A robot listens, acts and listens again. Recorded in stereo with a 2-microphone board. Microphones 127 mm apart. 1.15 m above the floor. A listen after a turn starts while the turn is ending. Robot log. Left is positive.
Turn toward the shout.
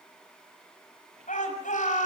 cmd yaw +90
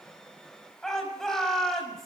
end: Found it: a shout, straight ahead.